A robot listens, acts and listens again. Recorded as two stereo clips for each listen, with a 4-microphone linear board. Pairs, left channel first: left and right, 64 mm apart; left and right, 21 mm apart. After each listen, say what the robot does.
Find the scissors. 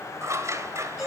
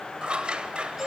Turn 50° right.
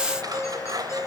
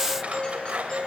Turn 80° right.
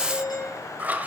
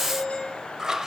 Turn 25° right.
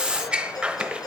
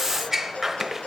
Turn 15° right.
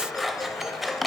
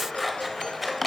Facing the scissors.